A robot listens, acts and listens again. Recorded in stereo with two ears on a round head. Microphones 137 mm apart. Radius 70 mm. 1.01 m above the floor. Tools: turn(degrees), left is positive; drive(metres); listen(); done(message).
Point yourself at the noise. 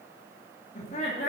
turn(degrees=45)
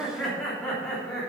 done("Facing the laughter, 2 to 4 m away.")